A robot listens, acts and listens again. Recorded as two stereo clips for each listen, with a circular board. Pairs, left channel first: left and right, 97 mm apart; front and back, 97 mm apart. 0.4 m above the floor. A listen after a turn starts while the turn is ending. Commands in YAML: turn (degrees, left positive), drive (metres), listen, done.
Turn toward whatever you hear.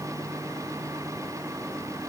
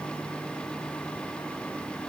listen: true
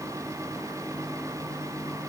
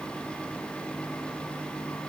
listen: true
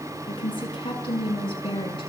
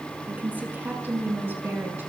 turn: 110
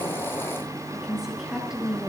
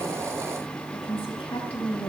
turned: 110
done: "Facing the woman speaking."